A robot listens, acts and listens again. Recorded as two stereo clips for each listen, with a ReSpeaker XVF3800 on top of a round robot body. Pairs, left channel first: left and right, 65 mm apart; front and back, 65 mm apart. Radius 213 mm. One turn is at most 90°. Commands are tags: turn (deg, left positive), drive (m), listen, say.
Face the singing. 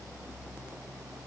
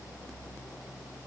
<listen/>
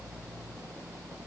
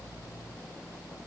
<listen/>
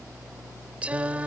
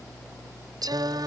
<turn deg="-90"/>
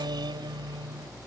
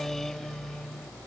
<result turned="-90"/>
<turn deg="-85"/>
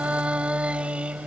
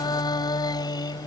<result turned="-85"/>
<turn deg="-15"/>
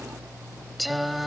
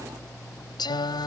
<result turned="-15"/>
<say>Found it: singing, straight ahead.</say>